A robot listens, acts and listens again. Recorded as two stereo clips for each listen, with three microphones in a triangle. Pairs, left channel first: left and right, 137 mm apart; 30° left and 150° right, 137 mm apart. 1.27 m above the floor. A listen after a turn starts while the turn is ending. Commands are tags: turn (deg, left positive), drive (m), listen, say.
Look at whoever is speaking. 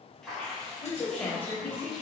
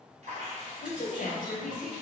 <turn deg="15"/>
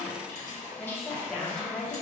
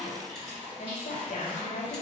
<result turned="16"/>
<say>Found it: a woman speaking, straight ahead.</say>